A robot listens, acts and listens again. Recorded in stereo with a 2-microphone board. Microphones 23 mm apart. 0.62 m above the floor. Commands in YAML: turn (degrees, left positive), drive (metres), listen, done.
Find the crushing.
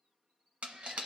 turn: -65
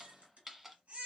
turn: -20
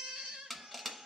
done: "Found it: crushing, straight ahead, under 1 m away."